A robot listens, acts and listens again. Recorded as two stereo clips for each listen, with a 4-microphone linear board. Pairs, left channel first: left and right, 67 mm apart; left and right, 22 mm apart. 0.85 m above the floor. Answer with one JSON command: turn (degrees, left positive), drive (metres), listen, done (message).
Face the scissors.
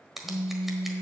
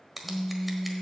{"turn": -30}
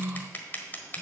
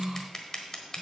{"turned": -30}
{"turn": 25}
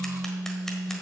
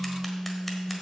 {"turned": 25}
{"listen": true}
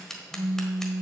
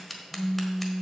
{"done": "Found it: scissors, straight ahead."}